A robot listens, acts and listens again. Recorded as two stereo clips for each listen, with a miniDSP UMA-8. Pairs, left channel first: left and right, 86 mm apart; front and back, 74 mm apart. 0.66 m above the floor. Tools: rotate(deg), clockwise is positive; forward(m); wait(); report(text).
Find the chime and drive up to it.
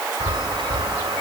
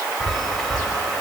rotate(90)
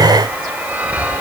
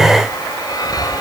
rotate(20)
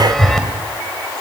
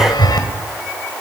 forward(1.0)
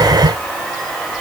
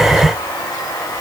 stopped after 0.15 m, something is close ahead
wait()
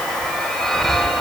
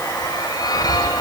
report("Blocked. The chime is further on, straight ahead.")